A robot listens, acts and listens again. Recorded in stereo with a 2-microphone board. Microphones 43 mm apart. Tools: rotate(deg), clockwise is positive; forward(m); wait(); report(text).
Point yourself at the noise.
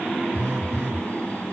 rotate(60)
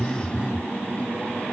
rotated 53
rotate(10)
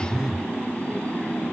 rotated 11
report("Facing the phone buzzing, under 1 m away.")